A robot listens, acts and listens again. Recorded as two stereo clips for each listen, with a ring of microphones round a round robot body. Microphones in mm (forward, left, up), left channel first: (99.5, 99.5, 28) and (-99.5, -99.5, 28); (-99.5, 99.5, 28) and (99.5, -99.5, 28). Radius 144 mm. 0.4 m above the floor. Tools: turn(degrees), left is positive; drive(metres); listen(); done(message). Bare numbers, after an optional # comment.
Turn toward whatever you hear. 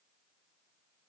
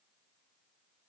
listen()
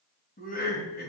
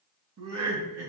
# The laughter: 10° right.
turn(-10)
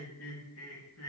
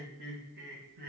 # The laughter is now 10° left.
turn(10)
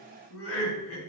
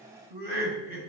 # The laughter is now 10° left.
turn(10)
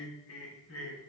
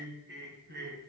# The laughter is now 10° left.
turn(10)
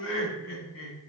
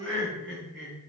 done("Facing the laughter.")